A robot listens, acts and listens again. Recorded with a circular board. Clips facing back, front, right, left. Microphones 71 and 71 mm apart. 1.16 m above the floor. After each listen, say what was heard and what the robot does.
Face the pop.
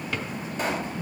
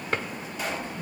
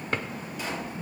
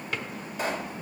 The pop: 135° left. Turn 135° left.
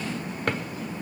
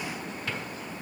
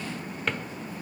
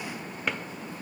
Facing where the pop came from. I can't hear it now.